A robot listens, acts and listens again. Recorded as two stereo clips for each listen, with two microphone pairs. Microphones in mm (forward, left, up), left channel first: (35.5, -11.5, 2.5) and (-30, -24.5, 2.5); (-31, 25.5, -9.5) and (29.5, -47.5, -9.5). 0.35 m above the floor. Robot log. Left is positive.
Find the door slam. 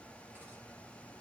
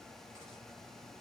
cmd idle
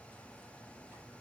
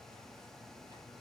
cmd idle
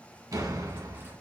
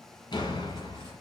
note: The door slam: 170° left.
cmd yaw +170
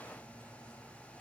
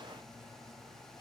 end: Facing where the door slam came from. I can't hear it now.